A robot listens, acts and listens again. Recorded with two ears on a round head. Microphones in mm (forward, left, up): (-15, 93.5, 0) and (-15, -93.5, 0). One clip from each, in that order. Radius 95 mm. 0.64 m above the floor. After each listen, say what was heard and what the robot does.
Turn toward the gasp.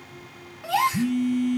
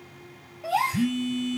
The gasp: about 40° left or 140° left. Turn 40° left.
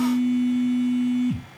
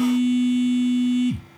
Keep listening.
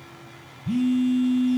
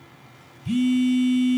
I heard a gasp, but can't make it out now. It was about straight ahead or 100° left.